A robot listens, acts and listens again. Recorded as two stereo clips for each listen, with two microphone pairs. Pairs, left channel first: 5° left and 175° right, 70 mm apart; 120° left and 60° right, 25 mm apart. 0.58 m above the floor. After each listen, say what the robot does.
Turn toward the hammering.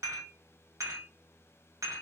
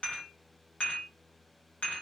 Keep listening.
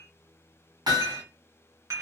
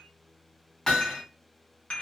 Turn 175° left.
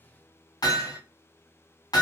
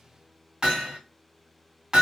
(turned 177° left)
Found it: hammering, straight ahead.